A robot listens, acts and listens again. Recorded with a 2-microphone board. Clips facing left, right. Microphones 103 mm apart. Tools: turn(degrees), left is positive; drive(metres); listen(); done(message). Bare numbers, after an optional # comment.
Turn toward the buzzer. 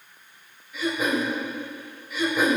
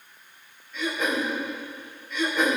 listen()
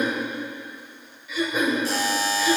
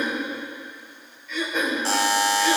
# The buzzer: about 75° right or 105° right.
turn(-75)
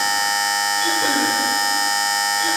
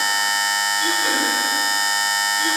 done("Found it: a buzzer, straight ahead, 1 to 2 m away.")